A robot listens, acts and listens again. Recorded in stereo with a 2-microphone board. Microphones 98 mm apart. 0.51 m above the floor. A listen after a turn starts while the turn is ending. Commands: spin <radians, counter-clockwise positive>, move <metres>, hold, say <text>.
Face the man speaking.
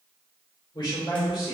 spin 0.87
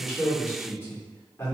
spin 0.52
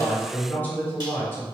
spin 0.52
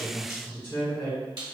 spin 0.44
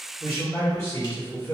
spin 0.35
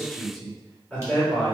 say Facing the man speaking, 1 to 2 m away.